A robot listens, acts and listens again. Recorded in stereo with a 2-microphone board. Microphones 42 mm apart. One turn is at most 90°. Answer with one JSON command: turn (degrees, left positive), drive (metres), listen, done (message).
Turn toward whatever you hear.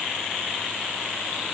{"listen": true}
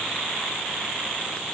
{"listen": true}
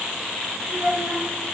{"turn": -60}
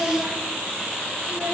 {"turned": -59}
{"turn": -10}
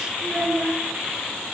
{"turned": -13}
{"turn": -10}
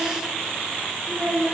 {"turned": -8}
{"done": "Facing the child speaking, over 4 m away."}